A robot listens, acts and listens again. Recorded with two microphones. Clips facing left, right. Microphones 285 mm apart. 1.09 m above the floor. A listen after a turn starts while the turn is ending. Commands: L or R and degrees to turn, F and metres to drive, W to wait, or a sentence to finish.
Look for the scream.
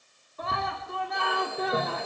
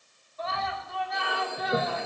L55
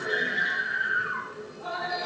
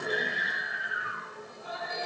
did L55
L70
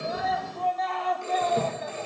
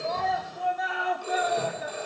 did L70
R10
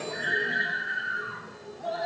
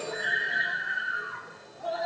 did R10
Found it: a scream, straight ahead, 2 to 4 m away.